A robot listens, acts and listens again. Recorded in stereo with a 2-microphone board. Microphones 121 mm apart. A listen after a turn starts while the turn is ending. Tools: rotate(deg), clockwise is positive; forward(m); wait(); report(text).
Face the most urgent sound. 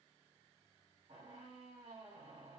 wait()
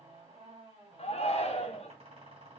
rotate(-60)
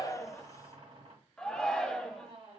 report("Found it: a shout, straight ahead, under 1 m away.")